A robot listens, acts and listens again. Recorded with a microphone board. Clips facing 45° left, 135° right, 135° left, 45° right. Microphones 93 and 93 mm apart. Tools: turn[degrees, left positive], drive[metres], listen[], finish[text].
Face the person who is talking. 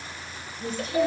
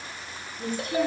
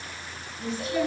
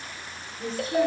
Thought: The woman speaking: 105° right.
Action: turn[-105]
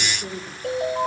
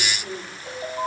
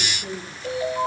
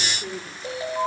Thought: The woman speaking is now 15° right.
Action: turn[-15]
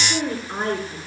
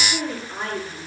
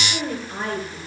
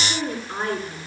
Action: finish[Facing the woman speaking, over 4 m away.]